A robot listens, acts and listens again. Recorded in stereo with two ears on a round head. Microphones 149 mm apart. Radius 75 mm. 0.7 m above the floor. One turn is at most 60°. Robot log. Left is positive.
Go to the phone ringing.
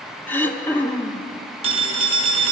note: The phone ringing: about 35° right or 145° right.
cmd yaw -35
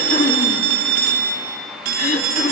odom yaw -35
note: So it is at 105° right.
cmd yaw -60
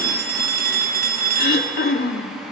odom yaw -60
note: The phone ringing is now 65° right.
cmd yaw -60
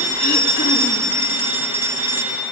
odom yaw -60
note: The phone ringing is now 15° right.
cmd yaw -15
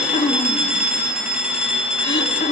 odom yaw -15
cmd fwd 1.0
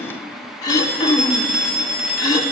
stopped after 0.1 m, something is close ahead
end: Blocked. The phone ringing is further on, straight ahead.